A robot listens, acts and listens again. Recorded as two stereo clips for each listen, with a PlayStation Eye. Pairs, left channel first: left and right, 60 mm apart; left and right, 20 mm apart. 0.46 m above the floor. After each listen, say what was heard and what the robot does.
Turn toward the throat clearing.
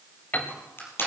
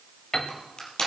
Keep listening.
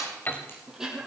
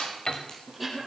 Turn 30° right.
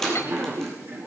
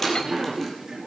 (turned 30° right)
So it is at 140° right. Turn 140° right.
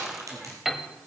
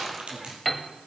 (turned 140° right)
The throat clearing is now 15° right. Turn 15° right.
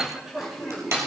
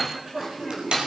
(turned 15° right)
Facing the throat clearing, over 4 m away.